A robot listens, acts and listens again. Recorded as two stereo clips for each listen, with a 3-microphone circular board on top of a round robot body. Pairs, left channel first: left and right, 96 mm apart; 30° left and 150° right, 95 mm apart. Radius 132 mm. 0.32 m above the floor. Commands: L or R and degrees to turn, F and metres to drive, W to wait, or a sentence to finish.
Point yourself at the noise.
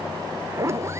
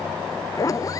R25
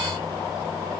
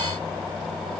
W
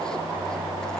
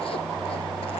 W
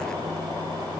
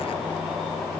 I heard a zipper from this way, but can't make it out now.